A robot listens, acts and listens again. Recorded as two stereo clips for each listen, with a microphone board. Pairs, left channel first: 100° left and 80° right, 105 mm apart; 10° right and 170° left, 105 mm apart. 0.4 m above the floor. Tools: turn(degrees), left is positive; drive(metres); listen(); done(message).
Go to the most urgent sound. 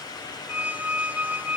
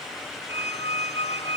listen()
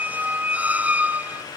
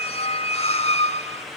listen()
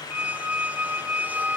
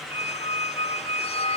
done("I can't make out anything urgent to turn to.")